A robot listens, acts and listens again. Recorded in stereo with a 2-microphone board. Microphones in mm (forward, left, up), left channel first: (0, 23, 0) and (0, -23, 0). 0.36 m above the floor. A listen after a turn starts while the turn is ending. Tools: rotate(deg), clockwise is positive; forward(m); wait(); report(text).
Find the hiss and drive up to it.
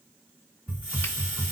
rotate(35)
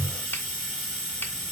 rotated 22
rotate(15)
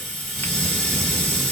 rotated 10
forward(1.0)
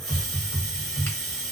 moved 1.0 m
rotate(10)
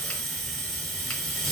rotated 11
forward(1.0)
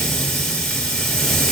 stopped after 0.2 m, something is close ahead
report("I am next to the hiss.")